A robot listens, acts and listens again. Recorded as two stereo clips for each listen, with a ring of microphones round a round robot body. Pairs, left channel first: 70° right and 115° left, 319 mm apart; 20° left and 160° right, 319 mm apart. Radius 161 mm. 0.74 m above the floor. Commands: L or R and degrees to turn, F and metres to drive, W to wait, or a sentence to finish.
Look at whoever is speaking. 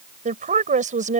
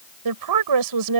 L180
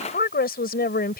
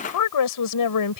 Facing the woman speaking.